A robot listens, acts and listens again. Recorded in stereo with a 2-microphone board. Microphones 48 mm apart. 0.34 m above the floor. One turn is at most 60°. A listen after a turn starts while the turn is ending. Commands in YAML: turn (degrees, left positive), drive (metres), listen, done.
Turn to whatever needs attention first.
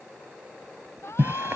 turn: 60
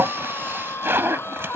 turn: 55
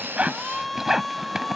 done: "Facing the shout."